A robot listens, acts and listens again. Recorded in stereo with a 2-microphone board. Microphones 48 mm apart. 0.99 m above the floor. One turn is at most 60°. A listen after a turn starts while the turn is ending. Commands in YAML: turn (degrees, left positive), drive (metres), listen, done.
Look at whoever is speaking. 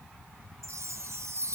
listen: true
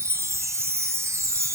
listen: true
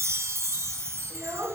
turn: -60
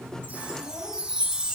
listen: true
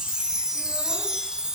listen: true
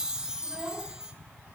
done: "I heard a child speaking, but can't make it out now. It was about 15° right or 45° right."